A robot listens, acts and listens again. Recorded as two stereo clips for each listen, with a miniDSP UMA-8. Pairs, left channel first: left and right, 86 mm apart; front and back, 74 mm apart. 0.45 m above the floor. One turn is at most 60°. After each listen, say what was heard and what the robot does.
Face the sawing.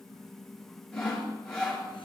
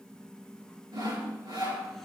The sawing: 170° left. Turn 60° left.
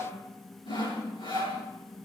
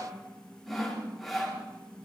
The sawing is now 85° left. Turn 60° left.
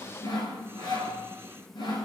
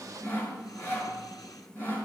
The sawing is now 55° left. Turn 55° left.
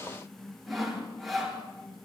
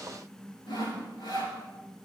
Found it: sawing, straight ahead, over 4 m away.